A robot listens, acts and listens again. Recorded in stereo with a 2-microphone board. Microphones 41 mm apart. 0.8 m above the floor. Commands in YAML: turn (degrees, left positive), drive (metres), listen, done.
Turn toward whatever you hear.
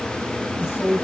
turn: 70
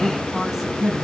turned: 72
done: "Facing the woman speaking, over 4 m away."